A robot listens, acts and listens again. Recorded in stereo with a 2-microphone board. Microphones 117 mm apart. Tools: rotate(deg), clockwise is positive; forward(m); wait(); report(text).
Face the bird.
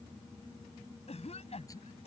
wait()
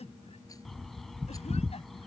rotate(-30)
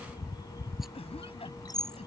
rotate(-145)
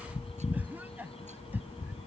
rotate(-65)
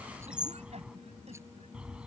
rotate(10)
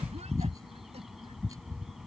report("Found it: a bird, straight ahead.")